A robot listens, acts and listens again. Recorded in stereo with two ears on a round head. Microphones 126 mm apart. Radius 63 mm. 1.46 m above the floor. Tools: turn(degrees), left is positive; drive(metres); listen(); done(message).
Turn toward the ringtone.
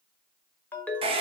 turn(degrees=30)
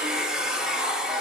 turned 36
listen()
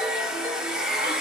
listen()
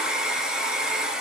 done("I heard a ringtone, but can't make it out now. It was about 25° right or 130° left.")